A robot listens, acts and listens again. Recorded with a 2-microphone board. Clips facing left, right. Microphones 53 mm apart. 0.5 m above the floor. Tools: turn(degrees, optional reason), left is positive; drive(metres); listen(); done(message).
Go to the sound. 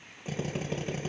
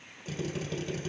turn(degrees=25, reason="The drill: about 25° left or 155° left.")
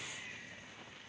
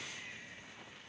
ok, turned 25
listen()
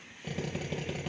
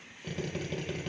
drive(metres=1.0)
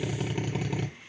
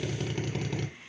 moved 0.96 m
turn(degrees=15, reason="The drill is now 15° left.")
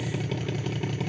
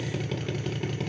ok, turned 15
drive(metres=1.0)
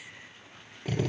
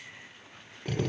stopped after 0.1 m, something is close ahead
done("I am next to the drill.")